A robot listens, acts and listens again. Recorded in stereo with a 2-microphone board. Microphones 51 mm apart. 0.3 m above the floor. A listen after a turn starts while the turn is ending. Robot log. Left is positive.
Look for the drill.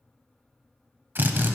note: The drill: about 45° right or 135° right.
cmd yaw -45
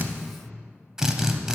note: So it is at 10° right.
cmd yaw -10
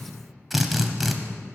end: Found it: a drill, straight ahead, under 1 m away.